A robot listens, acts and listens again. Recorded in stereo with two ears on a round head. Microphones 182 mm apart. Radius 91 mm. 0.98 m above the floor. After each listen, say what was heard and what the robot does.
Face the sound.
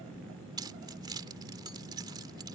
The keys jangling: about 20° right or 160° right. Turn 20° right.
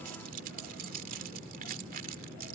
So it is at 135° right. Turn 135° right.
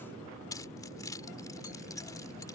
The keys jangling is now 20° left. Turn 20° left.
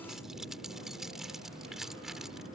Facing the keys jangling.